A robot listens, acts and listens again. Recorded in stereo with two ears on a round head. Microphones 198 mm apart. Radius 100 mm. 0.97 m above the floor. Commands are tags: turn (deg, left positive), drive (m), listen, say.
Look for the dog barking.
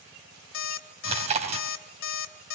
<listen/>
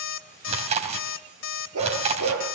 <turn deg="-70"/>
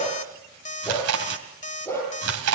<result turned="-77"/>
<turn deg="10"/>
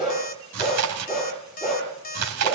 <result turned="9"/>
<say>Found it: a dog barking, straight ahead, over 4 m away.</say>